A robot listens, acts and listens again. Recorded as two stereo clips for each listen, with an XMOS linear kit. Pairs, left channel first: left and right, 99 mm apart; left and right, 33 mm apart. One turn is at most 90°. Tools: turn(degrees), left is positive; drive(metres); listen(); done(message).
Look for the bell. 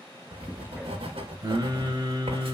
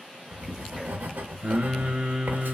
listen()
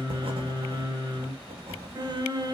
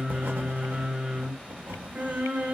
listen()
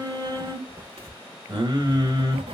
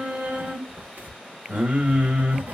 done("I can't make out a bell, only writing and singing.")